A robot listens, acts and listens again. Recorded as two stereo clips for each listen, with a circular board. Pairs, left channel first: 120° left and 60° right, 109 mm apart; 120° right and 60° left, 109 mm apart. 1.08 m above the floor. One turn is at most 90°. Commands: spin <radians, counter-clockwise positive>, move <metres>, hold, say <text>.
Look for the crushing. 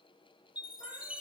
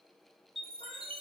hold
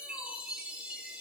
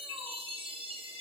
hold
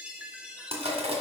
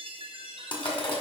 spin -1.48
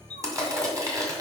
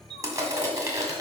say Found it: crushing, straight ahead, 1 to 2 m away.